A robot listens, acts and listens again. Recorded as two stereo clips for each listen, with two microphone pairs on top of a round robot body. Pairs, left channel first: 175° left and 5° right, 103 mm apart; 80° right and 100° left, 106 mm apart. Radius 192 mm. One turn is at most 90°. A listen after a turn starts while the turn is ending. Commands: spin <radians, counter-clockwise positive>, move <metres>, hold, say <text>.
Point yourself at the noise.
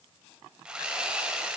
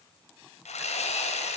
spin -1.57
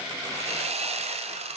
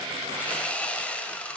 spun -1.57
say Facing the sawing.